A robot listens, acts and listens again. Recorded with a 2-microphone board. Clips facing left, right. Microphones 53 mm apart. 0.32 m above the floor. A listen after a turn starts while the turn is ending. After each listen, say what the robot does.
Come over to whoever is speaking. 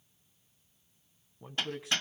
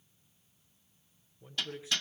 Turn 60° left.
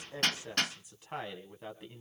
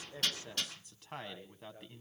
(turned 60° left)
Turn 10° left.
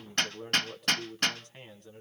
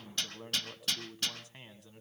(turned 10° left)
Drive 1.0 m forward.
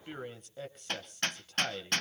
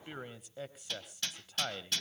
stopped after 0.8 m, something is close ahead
I am next to the man speaking.